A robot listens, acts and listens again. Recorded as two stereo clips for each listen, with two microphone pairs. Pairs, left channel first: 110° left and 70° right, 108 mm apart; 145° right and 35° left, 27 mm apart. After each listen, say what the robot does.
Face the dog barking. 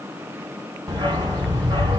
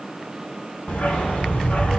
Turn 120° right.
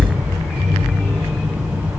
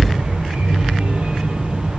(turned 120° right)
Turn 20° left.
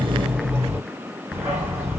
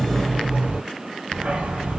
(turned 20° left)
Found it: a dog barking, straight ahead, 1 to 2 m away.